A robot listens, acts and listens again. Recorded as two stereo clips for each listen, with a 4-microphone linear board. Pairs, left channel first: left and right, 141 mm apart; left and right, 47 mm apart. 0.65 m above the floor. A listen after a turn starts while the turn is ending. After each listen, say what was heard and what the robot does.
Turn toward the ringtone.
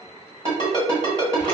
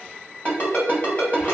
The ringtone: about 40° left or 140° left. Turn 40° left.
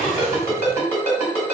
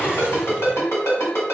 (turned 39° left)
So it is at 100° left. Turn 100° left.
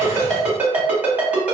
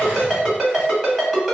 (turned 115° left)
The ringtone is now 10° right. Turn 10° right.
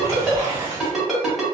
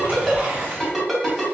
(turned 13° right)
Facing the ringtone, 1 to 2 m away.